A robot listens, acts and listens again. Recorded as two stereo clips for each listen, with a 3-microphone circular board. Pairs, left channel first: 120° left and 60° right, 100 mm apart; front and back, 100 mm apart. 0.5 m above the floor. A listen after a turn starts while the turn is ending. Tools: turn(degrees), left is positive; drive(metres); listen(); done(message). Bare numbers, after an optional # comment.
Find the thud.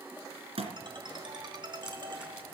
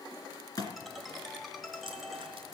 # The thud: 50° right.
turn(-50)
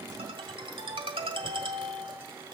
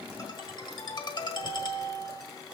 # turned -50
done("I heard a thud from this way, but can't make it out now.")